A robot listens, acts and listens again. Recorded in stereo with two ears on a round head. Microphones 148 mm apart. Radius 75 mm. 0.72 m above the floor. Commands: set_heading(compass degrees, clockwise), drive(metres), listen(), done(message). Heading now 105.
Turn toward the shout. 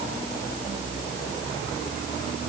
listen()
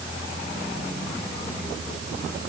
listen()
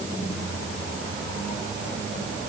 done("I can't make out a shout to turn to.")